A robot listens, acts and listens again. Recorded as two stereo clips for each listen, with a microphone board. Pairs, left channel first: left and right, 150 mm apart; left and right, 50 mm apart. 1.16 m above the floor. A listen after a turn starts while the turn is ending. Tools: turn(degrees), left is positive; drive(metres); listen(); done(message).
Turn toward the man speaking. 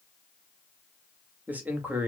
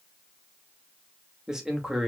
turn(degrees=-30)
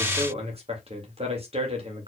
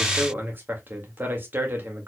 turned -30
turn(degrees=-140)
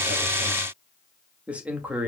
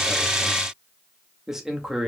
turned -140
turn(degrees=-10)
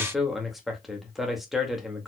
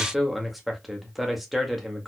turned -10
done("Facing the man speaking, 1 to 2 m away.")